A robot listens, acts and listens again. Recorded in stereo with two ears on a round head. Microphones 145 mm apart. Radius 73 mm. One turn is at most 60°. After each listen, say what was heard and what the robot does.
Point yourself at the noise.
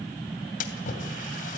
The splash: about 50° left or 130° left. Turn 50° left.
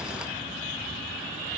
Keep listening.
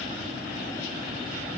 I heard a splash, but can't make it out now. It was about straight ahead or 80° left.